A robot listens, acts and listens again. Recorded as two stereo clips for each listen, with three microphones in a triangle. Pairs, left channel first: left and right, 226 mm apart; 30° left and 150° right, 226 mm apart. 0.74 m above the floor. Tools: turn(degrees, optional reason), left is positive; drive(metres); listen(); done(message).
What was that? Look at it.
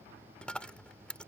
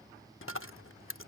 done("Found it: a dropped coin, straight ahead.")